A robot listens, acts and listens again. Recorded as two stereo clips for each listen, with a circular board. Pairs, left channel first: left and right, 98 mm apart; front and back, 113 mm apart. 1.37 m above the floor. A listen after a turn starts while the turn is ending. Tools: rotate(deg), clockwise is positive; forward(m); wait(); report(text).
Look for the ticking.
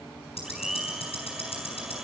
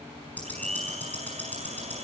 rotate(-75)
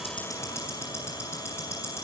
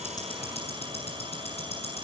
rotate(-25)
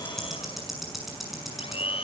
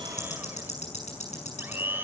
report("Found it: ticking, straight ahead, over 4 m away.")